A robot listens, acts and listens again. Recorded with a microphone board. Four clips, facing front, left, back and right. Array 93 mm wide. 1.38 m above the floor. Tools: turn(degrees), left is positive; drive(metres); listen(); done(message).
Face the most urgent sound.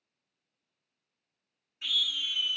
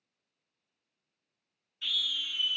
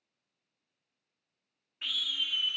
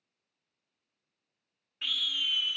turn(degrees=-125)
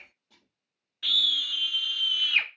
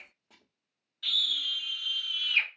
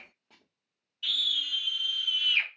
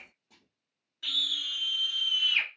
turn(degrees=-15)
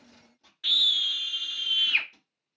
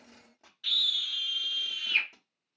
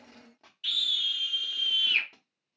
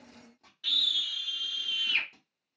done("Found it: a scream, straight ahead.")